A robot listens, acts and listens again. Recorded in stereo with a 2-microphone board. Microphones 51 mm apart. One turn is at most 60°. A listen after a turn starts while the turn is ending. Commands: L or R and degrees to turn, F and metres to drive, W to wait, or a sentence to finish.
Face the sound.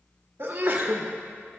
R45
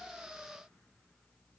W
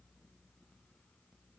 I heard a sneeze, but can't make it out now. It was about straight ahead or 90° right.